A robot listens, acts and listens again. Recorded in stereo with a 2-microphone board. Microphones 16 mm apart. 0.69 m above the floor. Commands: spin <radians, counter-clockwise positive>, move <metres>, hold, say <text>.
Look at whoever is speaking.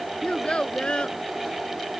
spin 1.57
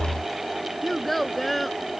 say Found it: a child speaking, straight ahead.